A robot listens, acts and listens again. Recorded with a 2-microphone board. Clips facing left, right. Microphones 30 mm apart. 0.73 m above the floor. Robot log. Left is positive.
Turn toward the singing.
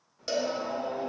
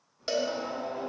note: The singing: about 20° left or 160° left.
cmd yaw +20
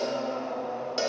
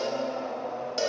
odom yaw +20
note: So it is at 15° right.
cmd yaw -15
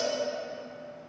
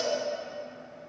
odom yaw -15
cmd idle
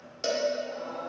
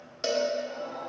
note: The singing is now 20° right.
cmd yaw -20
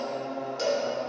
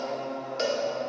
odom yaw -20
end: Facing the singing, 2 to 4 m away.